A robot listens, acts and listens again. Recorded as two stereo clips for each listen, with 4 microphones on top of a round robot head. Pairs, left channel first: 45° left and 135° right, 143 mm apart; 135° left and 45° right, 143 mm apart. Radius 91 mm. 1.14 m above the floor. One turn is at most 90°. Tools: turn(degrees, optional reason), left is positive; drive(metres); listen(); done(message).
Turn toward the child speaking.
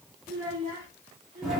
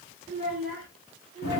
turn(degrees=-90, reason="The child speaking: 95° right.")
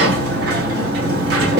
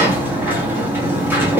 listen()
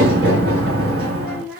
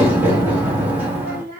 turn(degrees=-50, reason="The child speaking is now 50° right.")
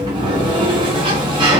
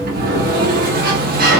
listen()
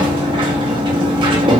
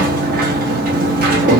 listen()
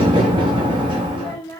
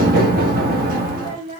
turn(degrees=-10, reason="The child speaking is now 10° right.")
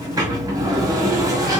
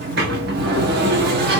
listen()
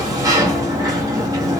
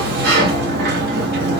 listen()
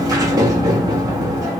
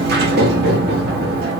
done("I heard a child speaking from this way, but can't make it out now.")